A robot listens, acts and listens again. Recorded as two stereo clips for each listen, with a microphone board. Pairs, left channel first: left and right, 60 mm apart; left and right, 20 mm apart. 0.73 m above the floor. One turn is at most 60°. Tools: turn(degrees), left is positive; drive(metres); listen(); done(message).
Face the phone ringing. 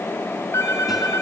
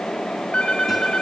turn(degrees=60)
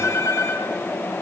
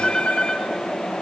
turn(degrees=60)
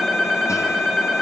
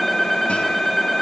done("Facing the phone ringing.")